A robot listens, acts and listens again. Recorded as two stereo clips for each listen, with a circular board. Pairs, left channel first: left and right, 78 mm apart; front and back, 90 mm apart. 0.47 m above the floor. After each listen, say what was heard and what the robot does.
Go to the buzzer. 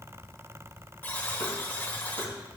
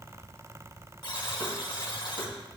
The buzzer: 30° left. Turn 30° left.
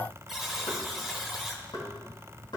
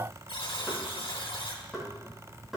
Drive 1.0 m forward.
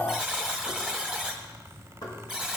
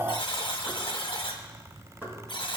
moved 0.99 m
Drive 1.0 m forward.
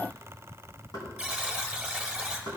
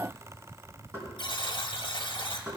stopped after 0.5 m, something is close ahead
The buzzer is now 10° right. Turn 10° right.
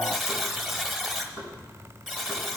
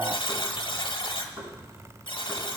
Arrived at the buzzer, straight ahead.